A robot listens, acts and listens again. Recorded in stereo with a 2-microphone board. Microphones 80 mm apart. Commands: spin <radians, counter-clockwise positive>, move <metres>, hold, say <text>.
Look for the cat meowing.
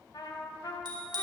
hold
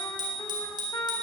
hold
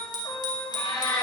spin 1.22
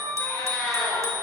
spin 0.17
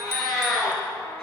say Found it: a cat meowing, straight ahead, over 4 m away.